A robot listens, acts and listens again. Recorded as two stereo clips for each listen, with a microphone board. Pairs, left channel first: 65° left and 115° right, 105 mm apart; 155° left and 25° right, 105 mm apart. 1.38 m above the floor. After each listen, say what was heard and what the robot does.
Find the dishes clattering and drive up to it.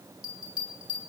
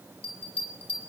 Keep listening.
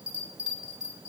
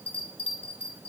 Keep listening.
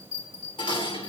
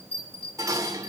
The dishes clattering: 35° left. Turn 35° left.
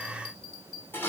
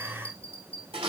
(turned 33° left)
Drive 1.0 m forward.
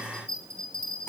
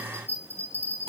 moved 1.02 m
Keep listening.
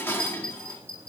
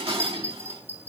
Drive 1.0 m forward.
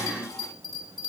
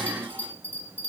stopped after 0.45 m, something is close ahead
The dishes clattering is now 10° left. Turn 10° left.
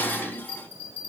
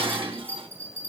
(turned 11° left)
I am next to the dishes clattering.